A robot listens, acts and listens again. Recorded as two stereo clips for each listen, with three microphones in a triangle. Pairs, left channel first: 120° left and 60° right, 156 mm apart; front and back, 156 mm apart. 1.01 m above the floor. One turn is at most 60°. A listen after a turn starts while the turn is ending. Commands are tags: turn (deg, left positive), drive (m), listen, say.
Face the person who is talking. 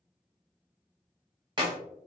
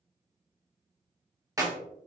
<listen/>
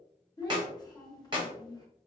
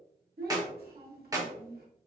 <turn deg="-60"/>
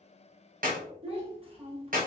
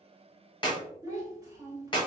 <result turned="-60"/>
<turn deg="-60"/>
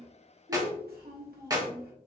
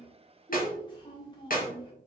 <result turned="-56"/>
<turn deg="-60"/>
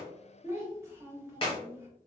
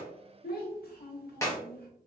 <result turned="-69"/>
<turn deg="10"/>
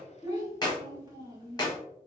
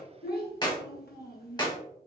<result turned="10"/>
<say>Facing the child speaking.</say>